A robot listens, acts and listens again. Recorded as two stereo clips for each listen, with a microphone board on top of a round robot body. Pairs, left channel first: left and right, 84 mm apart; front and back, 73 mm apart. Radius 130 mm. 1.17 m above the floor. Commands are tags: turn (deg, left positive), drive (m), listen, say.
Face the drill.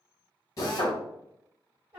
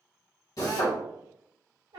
<turn deg="45"/>
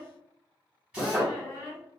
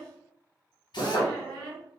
<turn deg="-10"/>
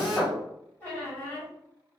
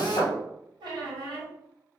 <say>Facing the drill, under 1 m away.</say>